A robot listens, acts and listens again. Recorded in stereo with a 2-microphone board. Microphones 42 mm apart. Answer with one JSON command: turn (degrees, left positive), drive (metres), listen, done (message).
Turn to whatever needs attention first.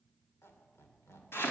{"listen": true}
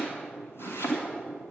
{"listen": true}
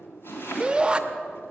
{"turn": -25}
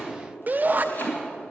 {"turn": -130}
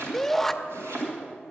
{"done": "Found it: a shout, straight ahead, under 1 m away."}